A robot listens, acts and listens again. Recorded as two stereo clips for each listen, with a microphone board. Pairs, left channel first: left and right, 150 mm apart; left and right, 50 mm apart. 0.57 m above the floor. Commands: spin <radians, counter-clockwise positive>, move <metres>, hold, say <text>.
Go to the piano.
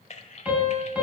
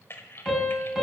spin -0.52
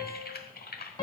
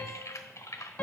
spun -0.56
spin 0.44
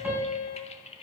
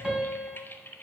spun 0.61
spin -0.17
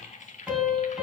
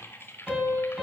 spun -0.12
move 1.0
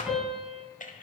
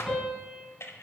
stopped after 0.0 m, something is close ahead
say Something is in my way. I am facing the piano but have not reached it.